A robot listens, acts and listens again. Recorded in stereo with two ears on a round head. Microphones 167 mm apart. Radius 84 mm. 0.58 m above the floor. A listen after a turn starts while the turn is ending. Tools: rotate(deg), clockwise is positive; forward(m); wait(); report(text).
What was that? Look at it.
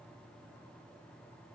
wait()
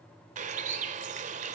rotate(45)
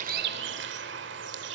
rotate(85)
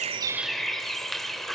report("Found it: a bird, straight ahead, 2 to 4 m away.")